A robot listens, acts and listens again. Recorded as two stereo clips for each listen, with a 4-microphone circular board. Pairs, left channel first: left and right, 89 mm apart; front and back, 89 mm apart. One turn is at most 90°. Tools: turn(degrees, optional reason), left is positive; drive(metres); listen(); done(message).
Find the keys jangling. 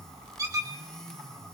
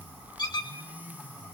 listen()
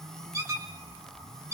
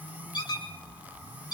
listen()
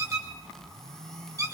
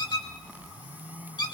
done("I can't make out keys jangling, only a squeak.")